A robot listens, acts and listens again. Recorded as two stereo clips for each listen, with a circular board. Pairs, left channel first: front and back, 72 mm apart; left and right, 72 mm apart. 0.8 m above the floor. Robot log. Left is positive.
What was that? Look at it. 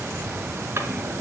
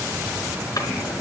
note: The drawer: 125° left.
cmd yaw +125
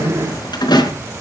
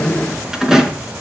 end: Found it: a drawer, straight ahead, over 4 m away.